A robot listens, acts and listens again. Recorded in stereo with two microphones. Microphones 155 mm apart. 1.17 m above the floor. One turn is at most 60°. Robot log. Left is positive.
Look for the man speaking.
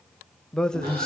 cmd yaw +30
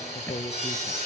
note: So it is at 145° left.
cmd yaw +60
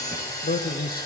note: The man speaking is now 70° left.
cmd yaw +60
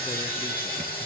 note: Nothing new. It was at 10° left.
cmd yaw +10
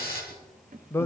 note: The man speaking is now 15° left.
cmd yaw +15
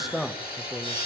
end: Found it: a man speaking, straight ahead, under 1 m away.